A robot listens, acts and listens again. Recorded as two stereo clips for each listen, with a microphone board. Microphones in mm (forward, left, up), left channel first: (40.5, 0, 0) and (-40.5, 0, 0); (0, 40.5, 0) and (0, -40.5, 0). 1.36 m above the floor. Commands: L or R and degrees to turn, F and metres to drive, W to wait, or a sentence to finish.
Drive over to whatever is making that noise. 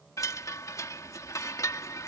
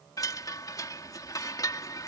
L50
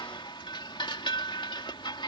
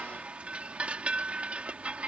R15
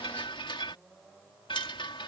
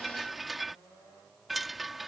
F1.0
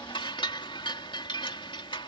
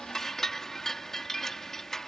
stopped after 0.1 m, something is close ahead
Blocked. The chime is further on, straight ahead.